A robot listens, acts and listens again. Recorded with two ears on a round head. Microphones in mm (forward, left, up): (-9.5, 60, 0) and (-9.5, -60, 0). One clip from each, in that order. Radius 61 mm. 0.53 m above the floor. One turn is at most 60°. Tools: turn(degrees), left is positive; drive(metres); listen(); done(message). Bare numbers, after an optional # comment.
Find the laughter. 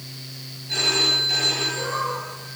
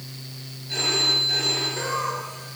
# The laughter: about 65° right or 115° right.
turn(-60)
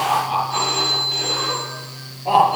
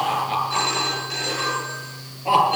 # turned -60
# So it is at 55° right.
turn(-55)
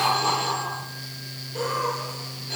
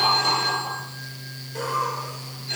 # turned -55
# The laughter is now 30° right.
turn(-30)
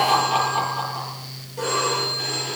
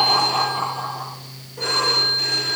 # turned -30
# The laughter is now 15° left.
turn(15)
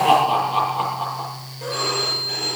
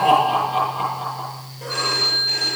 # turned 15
done("Facing the laughter, over 4 m away.")